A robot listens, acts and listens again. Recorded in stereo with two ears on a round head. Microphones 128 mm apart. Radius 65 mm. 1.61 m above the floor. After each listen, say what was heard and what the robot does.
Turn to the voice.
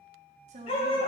The woman speaking: about 50° right or 130° right. Turn 50° right.
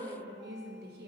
So it is at 80° right. Turn 80° right.
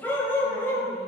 Keep listening.
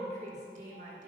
The woman speaking is now 55° right. Turn 55° right.
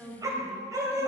The woman speaking is now 10° right. Turn 10° right.
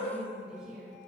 The woman speaking is now 10° right. Turn 10° right.
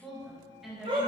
Found it: a woman speaking, straight ahead, 2 to 4 m away.